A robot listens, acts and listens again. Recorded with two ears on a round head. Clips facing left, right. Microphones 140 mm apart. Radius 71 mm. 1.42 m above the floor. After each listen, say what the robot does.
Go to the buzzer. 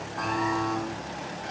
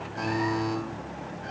Turn 25° right.
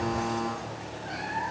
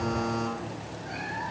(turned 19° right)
Drive 1.0 m forward.
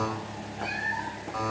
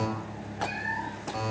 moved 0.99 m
Drive 1.0 m forward.
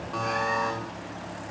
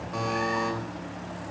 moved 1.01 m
Turn 10° right.
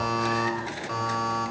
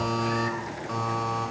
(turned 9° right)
Drive 1.0 m forward.
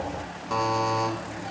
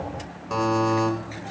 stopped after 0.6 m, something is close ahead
I am next to the buzzer.